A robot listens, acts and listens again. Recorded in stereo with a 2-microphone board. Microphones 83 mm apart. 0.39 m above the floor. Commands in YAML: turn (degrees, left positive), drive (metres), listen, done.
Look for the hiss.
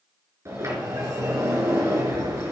listen: true
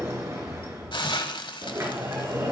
turn: 70
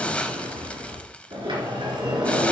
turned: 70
listen: true
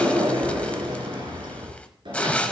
turn: 15
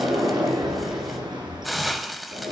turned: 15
done: "Facing the hiss."